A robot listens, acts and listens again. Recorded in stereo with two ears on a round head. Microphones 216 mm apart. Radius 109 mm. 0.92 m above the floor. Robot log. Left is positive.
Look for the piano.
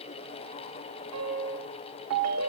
note: The piano: about 60° right or 120° right.
cmd yaw -60
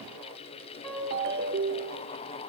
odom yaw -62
end: Found it: a piano, straight ahead, over 4 m away.